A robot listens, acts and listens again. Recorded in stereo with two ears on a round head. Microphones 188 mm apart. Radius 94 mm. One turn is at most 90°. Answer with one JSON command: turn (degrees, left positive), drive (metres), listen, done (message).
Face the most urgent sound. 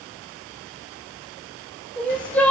{"turn": 30}
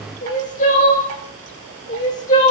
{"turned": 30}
{"turn": 90}
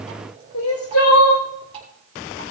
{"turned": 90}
{"turn": 80}
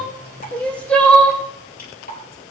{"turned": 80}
{"done": "Found it: crying, straight ahead."}